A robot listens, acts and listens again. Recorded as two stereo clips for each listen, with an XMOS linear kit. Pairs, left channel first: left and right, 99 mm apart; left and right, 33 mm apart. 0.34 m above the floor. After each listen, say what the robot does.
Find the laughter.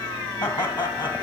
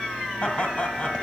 Turn 45° left.
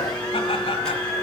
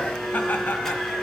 Keep listening.
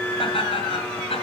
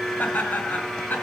Turn 70° left.
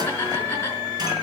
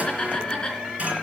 Turn 25° left.
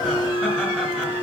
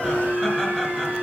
Keep listening.
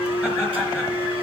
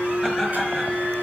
Keep listening.
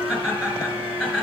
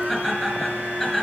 Facing the laughter, over 4 m away.